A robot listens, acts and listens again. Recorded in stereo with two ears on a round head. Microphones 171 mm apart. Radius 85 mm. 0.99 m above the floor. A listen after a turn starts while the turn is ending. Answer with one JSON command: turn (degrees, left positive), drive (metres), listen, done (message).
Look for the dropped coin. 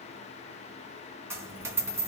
{"turn": -30}
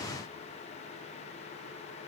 {"listen": true}
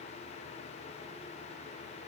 {"done": "I heard a dropped coin, but can't make it out now. It was about 15° left or 135° right."}